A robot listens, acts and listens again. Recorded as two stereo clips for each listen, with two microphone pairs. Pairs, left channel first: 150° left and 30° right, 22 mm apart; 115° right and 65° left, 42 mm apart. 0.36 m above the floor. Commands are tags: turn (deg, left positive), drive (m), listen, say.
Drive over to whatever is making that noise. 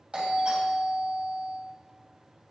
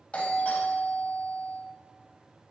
<turn deg="-65"/>
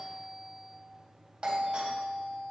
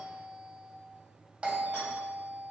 <drive m="1.0"/>
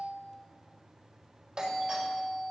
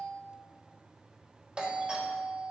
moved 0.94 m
<turn deg="10"/>
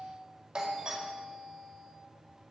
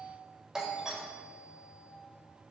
<drive m="1.0"/>
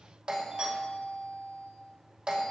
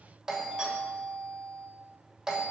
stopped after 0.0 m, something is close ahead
<say>I am next to the doorbell.</say>